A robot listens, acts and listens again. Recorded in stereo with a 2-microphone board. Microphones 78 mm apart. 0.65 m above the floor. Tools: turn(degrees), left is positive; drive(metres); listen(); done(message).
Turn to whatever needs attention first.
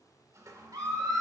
turn(degrees=-60)
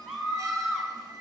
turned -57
done("Found it: a scream, straight ahead.")